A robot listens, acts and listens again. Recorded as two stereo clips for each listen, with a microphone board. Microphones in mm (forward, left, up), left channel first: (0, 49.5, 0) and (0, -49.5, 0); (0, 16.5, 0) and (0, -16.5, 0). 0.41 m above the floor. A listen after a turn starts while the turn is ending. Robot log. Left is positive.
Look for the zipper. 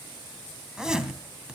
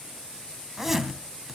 cmd yaw -30
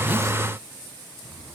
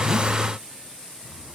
cmd idle
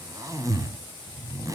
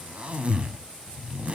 note: So it is at 140° right.
cmd yaw -140
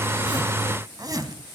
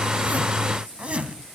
note: The zipper is now 50° right.
cmd yaw -50
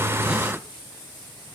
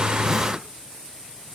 cmd idle
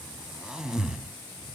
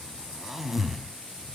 note: The zipper is now 10° right.
cmd yaw -10
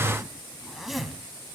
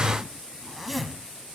end: Found it: a zipper, straight ahead.